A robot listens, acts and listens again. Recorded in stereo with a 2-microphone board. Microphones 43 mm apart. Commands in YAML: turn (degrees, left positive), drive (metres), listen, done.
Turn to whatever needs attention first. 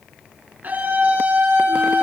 turn: -45
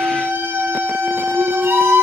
turn: -90
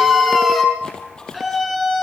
done: "Facing the scream."